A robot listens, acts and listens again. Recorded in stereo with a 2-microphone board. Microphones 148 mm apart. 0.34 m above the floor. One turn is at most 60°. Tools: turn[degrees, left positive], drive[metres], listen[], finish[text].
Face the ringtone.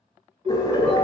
Thought: The ringtone: about 40° right or 140° right.
Action: turn[-40]
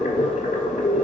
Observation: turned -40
Action: listen[]
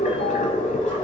Action: listen[]
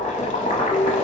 Action: finish[I heard a ringtone, but can't make it out now. It was about straight ahead or 100° right.]